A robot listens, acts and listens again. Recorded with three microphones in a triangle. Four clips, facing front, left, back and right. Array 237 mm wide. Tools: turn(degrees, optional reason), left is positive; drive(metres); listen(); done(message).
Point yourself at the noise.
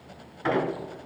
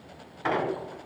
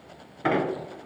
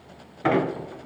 turn(degrees=-120, reason="The squeak: 120° right.")
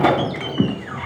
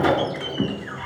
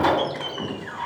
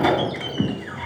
done("Found it: a squeak, straight ahead, 1 to 2 m away.")